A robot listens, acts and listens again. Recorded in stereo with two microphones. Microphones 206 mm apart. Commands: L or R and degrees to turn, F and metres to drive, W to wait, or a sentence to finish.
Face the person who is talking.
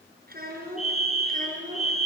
R40
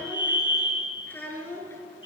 L10
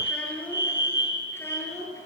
L15
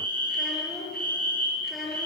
Found it: a child speaking, straight ahead, over 4 m away.